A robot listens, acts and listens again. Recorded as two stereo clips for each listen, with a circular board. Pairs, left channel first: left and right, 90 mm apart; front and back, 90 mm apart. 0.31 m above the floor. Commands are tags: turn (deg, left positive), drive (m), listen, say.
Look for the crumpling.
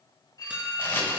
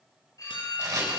<turn deg="145"/>
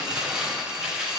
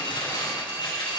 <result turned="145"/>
<turn deg="-15"/>
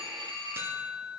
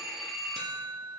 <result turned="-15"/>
<listen/>
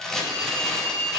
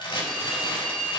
<say>Found it: crumpling, straight ahead, 2 to 4 m away.</say>